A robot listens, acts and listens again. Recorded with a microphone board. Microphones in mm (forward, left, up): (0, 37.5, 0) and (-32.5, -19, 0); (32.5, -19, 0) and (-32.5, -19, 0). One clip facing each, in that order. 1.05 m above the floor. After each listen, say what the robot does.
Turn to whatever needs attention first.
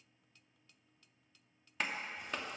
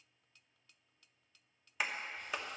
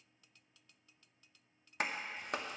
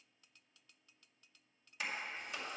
Keep listening.
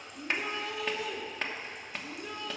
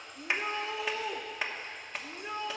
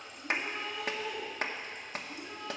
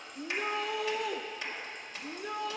Turn 180° left.
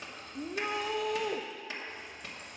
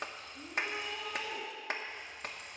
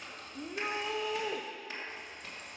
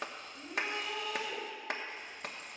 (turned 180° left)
Turn 60° left.
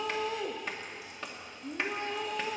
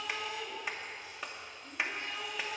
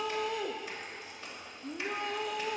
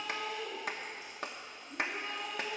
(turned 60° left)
Turn 15° left.
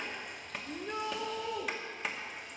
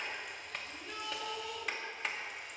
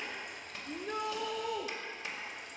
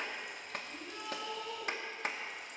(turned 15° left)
Found it: a shout, straight ahead, under 1 m away.